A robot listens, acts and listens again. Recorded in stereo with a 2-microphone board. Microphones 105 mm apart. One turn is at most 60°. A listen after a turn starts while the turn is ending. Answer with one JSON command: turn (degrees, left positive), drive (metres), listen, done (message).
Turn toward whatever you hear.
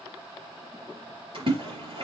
{"turn": -55}
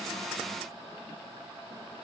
{"listen": true}
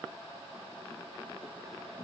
{"done": "I heard a splash, but can't make it out now. It was about straight ahead or 70° right."}